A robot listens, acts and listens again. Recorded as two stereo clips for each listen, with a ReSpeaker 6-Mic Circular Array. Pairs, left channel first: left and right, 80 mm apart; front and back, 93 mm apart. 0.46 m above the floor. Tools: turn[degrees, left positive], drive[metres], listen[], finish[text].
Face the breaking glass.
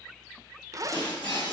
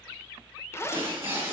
Thought: The breaking glass: 115° left.
Action: turn[115]
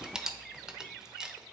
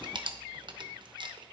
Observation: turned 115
Action: finish[I heard breaking glass from this way, but can't make it out now.]